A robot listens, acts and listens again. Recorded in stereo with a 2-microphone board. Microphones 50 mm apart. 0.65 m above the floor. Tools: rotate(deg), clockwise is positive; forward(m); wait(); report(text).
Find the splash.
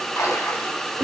rotate(-65)
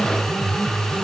wait()
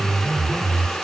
report("I heard a splash, but can't make it out now. It was about straight ahead or 50° left.")